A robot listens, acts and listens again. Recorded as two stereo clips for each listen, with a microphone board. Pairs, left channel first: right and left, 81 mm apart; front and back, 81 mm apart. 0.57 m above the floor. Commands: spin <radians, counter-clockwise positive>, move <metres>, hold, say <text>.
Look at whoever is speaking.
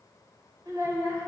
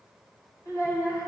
spin 0.79
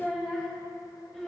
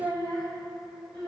say Facing the child speaking, 2 to 4 m away.